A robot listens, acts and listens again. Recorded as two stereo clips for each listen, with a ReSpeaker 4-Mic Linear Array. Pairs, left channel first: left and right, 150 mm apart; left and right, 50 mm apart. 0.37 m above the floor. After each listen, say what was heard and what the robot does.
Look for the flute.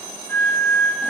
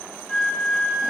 Turn 30° left.
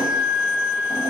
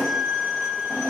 So it is at 15° right. Turn 15° right.
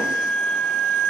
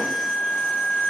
Found it: a flute, straight ahead, 1 to 2 m away.